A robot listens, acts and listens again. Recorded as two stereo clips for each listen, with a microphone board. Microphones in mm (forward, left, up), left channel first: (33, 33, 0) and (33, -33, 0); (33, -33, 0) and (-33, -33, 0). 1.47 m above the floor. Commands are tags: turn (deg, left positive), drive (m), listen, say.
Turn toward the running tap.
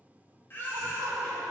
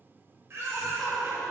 <listen/>
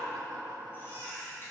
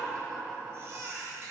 <listen/>
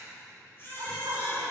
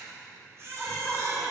<say>I can't make out a running tap to turn to.</say>